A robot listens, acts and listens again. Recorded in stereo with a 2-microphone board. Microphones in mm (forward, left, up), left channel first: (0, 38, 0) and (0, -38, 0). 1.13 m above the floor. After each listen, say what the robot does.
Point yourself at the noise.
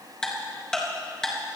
Turn 30° left.
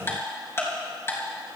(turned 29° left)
Turn 145° left.
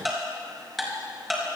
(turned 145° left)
Facing the ticking.